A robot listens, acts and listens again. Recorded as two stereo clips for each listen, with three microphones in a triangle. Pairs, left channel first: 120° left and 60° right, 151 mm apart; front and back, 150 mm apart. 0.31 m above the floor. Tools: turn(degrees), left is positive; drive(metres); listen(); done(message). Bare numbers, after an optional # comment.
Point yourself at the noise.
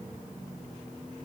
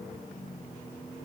listen()
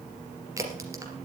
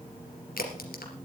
# The crack: 10° left.
turn(10)
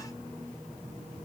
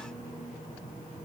done("Facing where the crack came from. I can't hear it now.")